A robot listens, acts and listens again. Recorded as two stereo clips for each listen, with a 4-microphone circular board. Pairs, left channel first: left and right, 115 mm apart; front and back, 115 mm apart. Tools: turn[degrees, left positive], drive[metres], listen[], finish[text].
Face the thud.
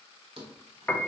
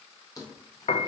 Thought: The thud: 60° right.
Action: turn[-60]
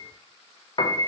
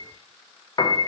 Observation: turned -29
Thought: Nothing new. It was at 30° right.
Action: turn[-30]
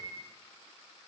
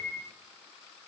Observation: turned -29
Action: finish[I heard a thud from this way, but can't make it out now.]